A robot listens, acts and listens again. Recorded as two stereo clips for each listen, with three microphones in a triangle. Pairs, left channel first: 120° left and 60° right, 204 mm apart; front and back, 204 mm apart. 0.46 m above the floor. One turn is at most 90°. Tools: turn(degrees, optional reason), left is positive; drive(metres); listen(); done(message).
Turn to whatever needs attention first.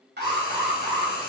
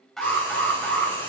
turn(degrees=-90, reason="The alarm: 90° right.")
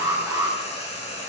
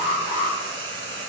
turn(degrees=10, reason="The alarm is now 10° left.")
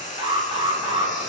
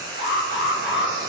done("Facing the alarm.")